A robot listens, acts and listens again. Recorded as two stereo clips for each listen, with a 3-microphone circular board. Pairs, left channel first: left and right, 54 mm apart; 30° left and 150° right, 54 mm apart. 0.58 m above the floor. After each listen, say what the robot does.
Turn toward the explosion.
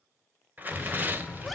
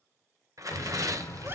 Found it: an explosion, straight ahead.